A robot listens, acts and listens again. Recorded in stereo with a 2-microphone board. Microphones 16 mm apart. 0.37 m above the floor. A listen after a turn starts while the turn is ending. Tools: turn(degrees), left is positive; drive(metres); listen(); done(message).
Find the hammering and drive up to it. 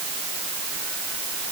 listen()
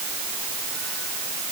listen()
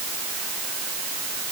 done("I can't make out hammering.")